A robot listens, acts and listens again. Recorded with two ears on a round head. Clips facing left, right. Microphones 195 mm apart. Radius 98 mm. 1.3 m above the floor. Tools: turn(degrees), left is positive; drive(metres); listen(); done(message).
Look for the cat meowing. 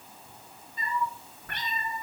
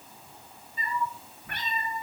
turn(degrees=-30)
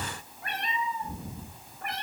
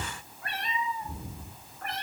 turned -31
turn(degrees=15)
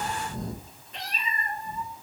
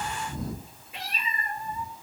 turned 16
turn(degrees=-10)
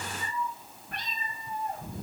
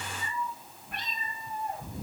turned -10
done("Found it: a cat meowing, straight ahead.")